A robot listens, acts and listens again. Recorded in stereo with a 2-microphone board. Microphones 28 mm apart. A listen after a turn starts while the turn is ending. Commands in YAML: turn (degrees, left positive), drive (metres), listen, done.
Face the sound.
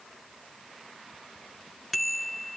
turn: 30
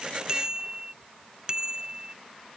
turn: -30
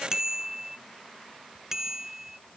turn: -20
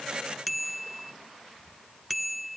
done: "Found it: a bicycle bell, straight ahead."